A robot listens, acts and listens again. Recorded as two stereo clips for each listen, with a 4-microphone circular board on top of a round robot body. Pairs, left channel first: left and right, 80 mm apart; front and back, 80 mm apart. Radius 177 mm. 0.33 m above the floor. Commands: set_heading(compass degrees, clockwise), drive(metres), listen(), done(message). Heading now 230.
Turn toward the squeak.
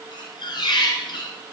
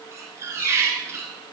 set_heading(110)
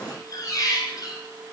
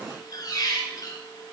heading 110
set_heading(65)
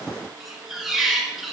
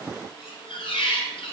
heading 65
done("Facing the squeak.")